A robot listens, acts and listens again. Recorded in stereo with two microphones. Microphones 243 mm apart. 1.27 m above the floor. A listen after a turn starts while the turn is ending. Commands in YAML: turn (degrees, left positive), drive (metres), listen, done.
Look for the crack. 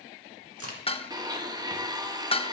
turn: -70
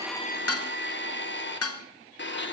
listen: true
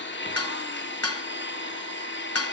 done: "I heard a crack, but can't make it out now. It was about straight ahead or 40° right."